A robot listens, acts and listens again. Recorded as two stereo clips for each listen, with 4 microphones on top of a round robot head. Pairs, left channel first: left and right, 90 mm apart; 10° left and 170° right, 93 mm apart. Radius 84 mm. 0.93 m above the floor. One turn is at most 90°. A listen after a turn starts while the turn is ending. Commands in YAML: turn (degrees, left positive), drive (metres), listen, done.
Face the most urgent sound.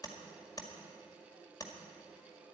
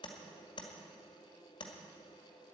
listen: true
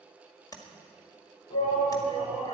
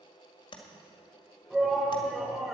turn: 90
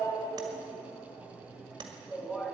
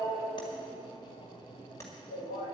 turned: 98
done: "Facing the shout, over 4 m away."